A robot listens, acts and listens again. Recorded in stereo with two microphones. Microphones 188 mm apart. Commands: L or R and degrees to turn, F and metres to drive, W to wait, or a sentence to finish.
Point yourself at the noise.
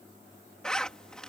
L30
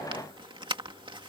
R25
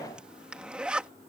Facing the zipper.